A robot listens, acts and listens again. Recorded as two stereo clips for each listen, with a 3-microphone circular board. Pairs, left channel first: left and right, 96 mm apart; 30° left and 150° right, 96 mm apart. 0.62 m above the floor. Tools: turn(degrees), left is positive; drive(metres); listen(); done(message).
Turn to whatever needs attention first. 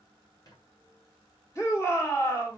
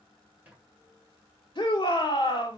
turn(degrees=35)
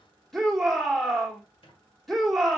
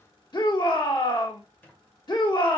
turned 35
done("Found it: a shout, straight ahead.")